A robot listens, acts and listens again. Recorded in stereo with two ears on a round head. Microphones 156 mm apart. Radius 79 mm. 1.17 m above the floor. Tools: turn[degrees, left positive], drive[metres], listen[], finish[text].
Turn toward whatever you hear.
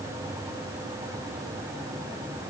Action: listen[]
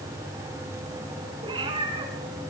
Thought: The cat meowing: about 30° right or 150° right.
Action: turn[-30]
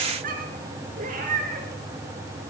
Thought: So it is at 130° right.
Action: turn[-130]
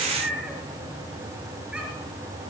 Action: finish[Found it: a cat meowing, straight ahead.]